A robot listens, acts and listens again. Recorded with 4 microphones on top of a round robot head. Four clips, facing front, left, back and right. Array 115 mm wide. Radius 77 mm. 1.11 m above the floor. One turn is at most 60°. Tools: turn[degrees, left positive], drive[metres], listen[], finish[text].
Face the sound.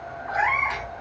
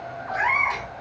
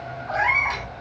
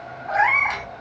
Thought: The cat meowing: 105° right.
Action: turn[-60]
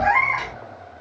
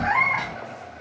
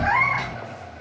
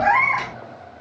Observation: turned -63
Thought: The cat meowing is now 45° right.
Action: turn[-45]
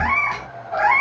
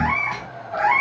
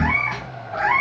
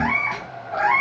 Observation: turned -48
Action: finish[Found it: a cat meowing, straight ahead, 2 to 4 m away.]